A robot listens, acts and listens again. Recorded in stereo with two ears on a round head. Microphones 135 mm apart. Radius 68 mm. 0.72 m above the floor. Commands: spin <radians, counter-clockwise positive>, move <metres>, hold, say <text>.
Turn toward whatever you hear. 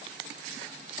hold
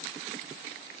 hold
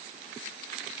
say I can't make out anything.